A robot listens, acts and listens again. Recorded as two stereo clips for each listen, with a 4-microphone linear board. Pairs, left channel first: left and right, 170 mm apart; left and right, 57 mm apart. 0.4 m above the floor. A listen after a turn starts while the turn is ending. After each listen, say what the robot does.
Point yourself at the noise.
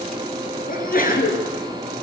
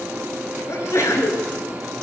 Turn 55° left.
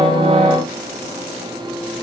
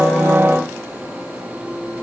Keep listening.
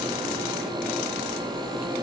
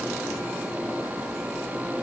I heard a sneeze, but can't make it out now. It was about straight ahead or 70° left.